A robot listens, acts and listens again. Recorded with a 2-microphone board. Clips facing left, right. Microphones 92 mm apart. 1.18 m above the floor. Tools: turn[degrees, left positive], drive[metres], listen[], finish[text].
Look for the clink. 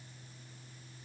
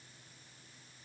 Action: listen[]
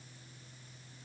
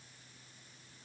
Action: listen[]
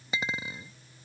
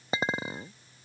Thought: The clink: about 40° right or 140° right.
Action: turn[-40]
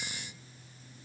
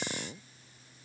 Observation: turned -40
Thought: So it is at 90° right.
Action: turn[-90]
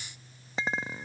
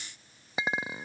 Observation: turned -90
Thought: The clink is now 10° right.
Action: turn[-10]
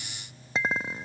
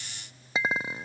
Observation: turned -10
Action: finish[Found it: a clink, straight ahead.]